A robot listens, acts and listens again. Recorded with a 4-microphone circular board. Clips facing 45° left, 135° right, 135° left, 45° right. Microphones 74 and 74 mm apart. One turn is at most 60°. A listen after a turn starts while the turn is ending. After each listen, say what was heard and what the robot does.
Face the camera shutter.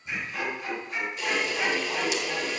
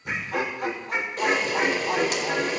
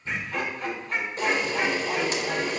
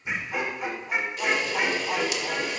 The camera shutter: 175° right. Turn 60° right.
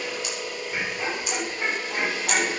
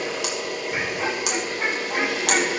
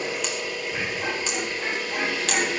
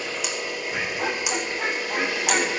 The camera shutter is now 120° right. Turn 60° right.
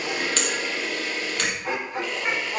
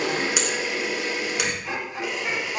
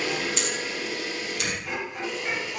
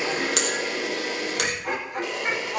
The camera shutter is now 60° right. Turn 60° right.
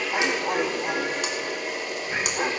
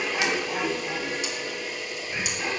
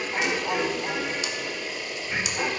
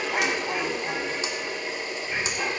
The camera shutter is now 15° left. Turn 15° left.
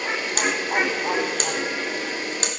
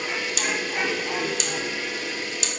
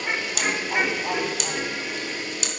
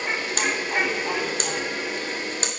Facing the camera shutter.